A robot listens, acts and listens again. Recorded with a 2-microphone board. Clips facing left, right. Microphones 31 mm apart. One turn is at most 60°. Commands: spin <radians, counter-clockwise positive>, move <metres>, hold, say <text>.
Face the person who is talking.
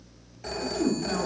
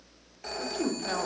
spin -0.87
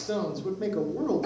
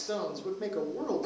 say Facing the woman speaking, 1 to 2 m away.